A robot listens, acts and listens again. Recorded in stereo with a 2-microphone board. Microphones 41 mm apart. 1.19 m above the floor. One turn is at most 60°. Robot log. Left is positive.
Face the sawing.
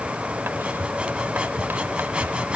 note: The sawing: about 25° right or 155° right.
cmd yaw -25
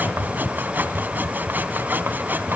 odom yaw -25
note: So it is at 130° right.
cmd yaw -60
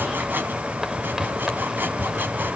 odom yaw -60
note: The sawing is now 60° right.
cmd yaw -60
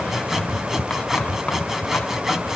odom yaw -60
note: The sawing is now 10° right.
cmd yaw -10
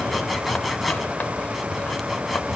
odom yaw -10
end: Found it: sawing, straight ahead.